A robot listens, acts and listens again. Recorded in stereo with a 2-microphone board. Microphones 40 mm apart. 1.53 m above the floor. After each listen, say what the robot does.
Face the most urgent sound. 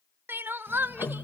Turn 65° right.
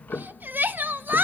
Turn 50° right.
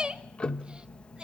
Turn 20° right.
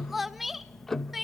Found it: crying, straight ahead, under 1 m away.